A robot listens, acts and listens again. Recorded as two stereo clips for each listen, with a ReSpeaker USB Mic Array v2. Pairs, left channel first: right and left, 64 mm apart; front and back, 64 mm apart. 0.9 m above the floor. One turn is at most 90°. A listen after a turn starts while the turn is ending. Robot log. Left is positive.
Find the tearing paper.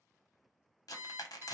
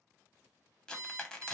note: The tearing paper: 80° right.
cmd yaw -80
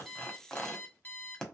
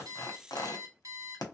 note: The tearing paper is now 10° right.
cmd yaw -10
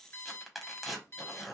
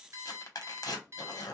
end: Facing the tearing paper, under 1 m away.